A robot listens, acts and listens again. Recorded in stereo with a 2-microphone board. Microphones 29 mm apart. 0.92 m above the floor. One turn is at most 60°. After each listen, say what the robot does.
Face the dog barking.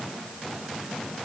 Keep listening.
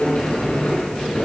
Keep listening.
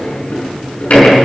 I can't make out a dog barking, only a sliding door.